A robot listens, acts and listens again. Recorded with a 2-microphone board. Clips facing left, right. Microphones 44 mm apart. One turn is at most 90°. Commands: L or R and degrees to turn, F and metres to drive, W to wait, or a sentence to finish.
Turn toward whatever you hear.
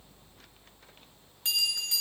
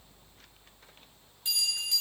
L90
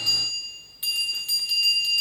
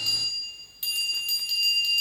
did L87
Found it: a bell, straight ahead.